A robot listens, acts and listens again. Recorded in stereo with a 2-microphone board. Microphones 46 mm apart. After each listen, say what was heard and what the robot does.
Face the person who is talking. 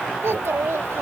Turn 90° right.
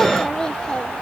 So it is at 15° left. Turn 15° left.
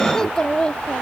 The child speaking is now 20° left. Turn 20° left.
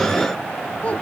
The child speaking is now 35° left. Turn 35° left.
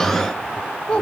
The child speaking is now 25° left. Turn 25° left.
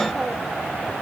Keep listening.
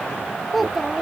Found it: a child speaking, straight ahead.